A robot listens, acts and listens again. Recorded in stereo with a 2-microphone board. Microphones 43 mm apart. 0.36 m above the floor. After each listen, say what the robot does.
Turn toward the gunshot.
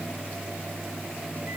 Keep listening.
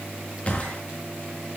Turn 30° left.
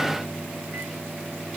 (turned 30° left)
Keep listening.
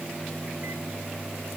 I heard a gunshot, but can't make it out now. It was about straight ahead or 120° left.